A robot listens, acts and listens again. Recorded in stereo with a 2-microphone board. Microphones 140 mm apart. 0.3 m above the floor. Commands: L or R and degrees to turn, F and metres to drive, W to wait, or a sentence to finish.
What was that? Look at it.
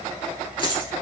L40
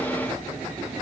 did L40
W
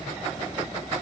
I heard a dropped coin, but can't make it out now. It was about straight ahead or 100° left.